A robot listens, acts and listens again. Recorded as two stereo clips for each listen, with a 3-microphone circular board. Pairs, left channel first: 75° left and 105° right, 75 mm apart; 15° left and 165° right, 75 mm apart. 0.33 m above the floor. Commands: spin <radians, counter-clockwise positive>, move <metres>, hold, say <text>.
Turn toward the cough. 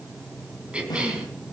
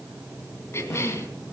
spin -0.52
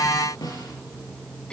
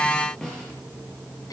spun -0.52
hold
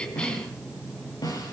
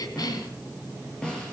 say Found it: a cough, straight ahead, 2 to 4 m away.